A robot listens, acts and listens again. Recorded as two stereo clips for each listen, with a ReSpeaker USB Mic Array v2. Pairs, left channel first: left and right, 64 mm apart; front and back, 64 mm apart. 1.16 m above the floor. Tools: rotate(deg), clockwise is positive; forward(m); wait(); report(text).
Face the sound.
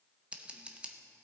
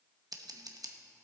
rotate(160)
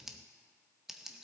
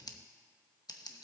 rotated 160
report("Found it: scissors, straight ahead.")